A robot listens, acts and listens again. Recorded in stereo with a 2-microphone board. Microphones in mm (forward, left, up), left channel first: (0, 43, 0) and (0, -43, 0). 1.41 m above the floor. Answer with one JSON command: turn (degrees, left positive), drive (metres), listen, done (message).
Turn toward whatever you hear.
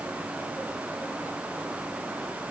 {"listen": true}
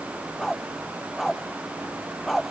{"turn": 30}
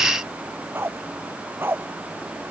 {"turn": -25}
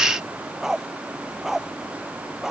{"done": "Facing the dog barking."}